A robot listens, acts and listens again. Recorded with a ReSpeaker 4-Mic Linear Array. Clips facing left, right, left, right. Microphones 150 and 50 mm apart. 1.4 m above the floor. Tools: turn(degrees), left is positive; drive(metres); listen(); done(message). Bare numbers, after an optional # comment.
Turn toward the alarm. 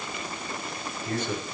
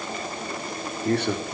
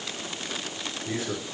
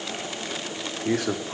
listen()
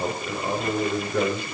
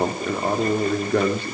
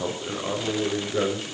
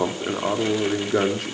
listen()
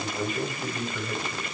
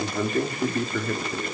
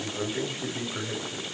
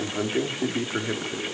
done("I can't make out an alarm to turn to.")